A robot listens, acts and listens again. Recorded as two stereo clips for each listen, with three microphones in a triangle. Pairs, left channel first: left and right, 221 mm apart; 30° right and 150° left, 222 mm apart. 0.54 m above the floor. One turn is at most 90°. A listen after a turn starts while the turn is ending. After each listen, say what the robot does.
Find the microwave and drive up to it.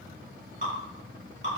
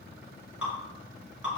Keep listening.
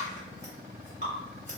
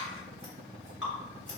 Keep listening.
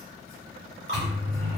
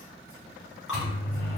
Turn 70° right.
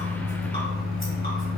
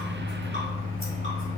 Drive 1.0 m forward.
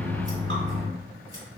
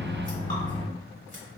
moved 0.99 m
Turn 20° left.
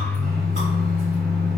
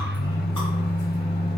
Drive 1.0 m forward.
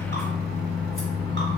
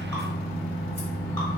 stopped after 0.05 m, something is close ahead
I am next to the microwave.